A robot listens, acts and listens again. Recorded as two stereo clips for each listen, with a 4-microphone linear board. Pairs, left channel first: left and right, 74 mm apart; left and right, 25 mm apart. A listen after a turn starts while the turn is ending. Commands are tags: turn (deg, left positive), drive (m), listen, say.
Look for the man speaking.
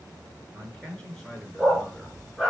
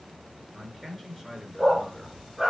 <turn deg="30"/>
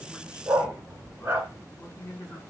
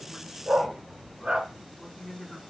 <turn deg="135"/>
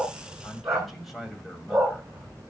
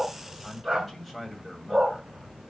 <say>Found it: a man speaking, straight ahead.</say>